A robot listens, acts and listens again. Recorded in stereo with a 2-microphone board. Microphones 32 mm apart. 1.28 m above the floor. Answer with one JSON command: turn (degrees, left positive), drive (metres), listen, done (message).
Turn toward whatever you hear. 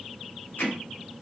{"turn": 90}
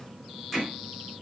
{"done": "Facing the hammering."}